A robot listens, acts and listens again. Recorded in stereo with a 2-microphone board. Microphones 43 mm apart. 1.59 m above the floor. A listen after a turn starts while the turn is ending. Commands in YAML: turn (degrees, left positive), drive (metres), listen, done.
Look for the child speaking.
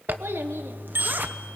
turn: -65
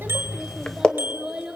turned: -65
turn: -10
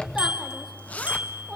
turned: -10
done: "Found it: a child speaking, straight ahead."